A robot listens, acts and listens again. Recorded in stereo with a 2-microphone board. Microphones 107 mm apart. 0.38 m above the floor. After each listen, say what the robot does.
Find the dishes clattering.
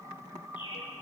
Keep listening.
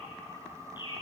Keep listening.
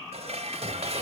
Turn 65° right.
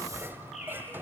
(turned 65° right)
Turn 20° right.
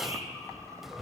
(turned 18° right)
Found it: dishes clattering, straight ahead.